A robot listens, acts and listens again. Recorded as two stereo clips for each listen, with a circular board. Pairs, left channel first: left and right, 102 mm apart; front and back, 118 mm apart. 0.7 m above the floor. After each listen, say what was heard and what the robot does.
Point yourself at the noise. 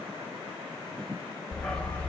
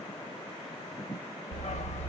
The dog barking: 15° left. Turn 15° left.
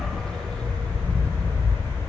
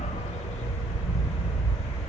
The dog barking is now 25° left. Turn 25° left.
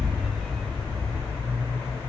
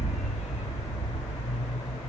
The dog barking is now 25° left. Turn 25° left.
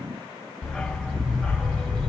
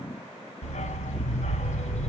Found it: a dog barking, straight ahead, 1 to 2 m away.